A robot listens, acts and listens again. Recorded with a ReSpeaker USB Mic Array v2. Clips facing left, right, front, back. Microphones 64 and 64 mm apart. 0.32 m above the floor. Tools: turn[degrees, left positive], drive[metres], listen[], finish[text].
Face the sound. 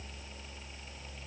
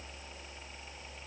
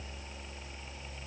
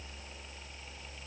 Action: listen[]
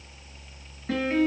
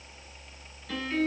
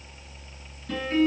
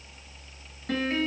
Thought: The piano: 140° left.
Action: turn[140]
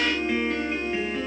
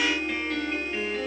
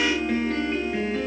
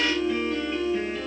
Thought: The piano is now 10° left.
Action: turn[10]
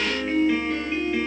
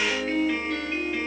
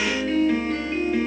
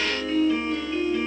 Action: finish[Facing the piano, over 4 m away.]